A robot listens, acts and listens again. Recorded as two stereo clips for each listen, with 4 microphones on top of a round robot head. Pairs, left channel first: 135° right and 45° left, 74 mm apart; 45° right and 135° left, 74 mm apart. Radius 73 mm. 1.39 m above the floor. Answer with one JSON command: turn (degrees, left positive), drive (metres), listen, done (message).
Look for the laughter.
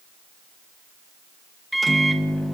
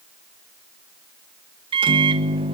{"listen": true}
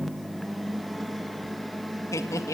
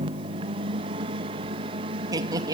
{"turn": 175}
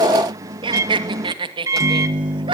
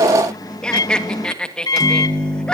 {"turn": 35}
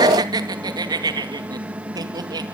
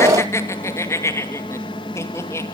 {"turn": 10}
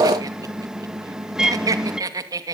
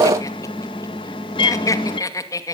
{"done": "Facing the laughter, 2 to 4 m away."}